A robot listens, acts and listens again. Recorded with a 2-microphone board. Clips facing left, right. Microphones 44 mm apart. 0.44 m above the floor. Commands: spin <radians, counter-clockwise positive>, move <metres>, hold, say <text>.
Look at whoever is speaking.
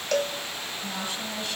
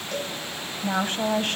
spin -0.79
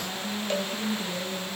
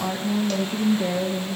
spin -1.40
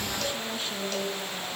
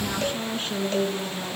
spin -0.61
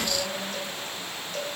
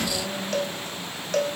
say Facing the woman speaking, over 4 m away.